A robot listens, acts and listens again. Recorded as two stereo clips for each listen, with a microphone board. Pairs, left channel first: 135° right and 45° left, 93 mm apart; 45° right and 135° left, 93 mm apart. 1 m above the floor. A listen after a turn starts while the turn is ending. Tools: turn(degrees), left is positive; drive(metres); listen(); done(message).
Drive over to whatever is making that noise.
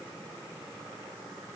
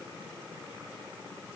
listen()
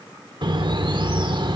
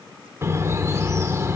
turn(degrees=75)
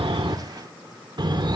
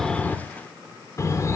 turn(degrees=10)
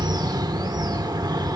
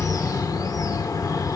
drive(metres=1.0)
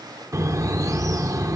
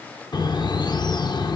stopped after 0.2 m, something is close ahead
turn(degrees=-10)
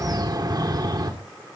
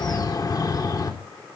done("Blocked. The bird is further on, straight ahead.")